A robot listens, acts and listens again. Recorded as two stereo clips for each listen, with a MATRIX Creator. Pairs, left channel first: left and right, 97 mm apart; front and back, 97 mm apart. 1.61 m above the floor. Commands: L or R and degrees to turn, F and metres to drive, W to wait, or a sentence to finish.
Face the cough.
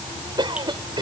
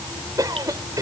R130
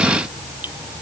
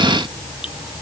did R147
L20
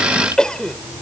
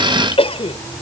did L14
Facing the cough.